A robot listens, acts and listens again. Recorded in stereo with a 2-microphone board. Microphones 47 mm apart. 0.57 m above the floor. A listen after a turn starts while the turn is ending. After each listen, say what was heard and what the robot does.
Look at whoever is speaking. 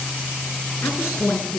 The woman speaking: about 70° left or 110° left. Turn 70° left.
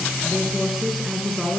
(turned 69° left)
Found it: a woman speaking, straight ahead.